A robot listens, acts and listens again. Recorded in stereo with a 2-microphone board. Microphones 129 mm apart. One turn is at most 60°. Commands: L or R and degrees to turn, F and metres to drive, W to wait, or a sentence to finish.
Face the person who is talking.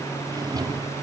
W
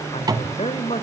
L60
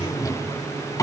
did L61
W
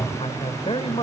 L55
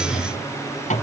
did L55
W
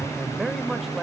Found it: a man speaking, straight ahead.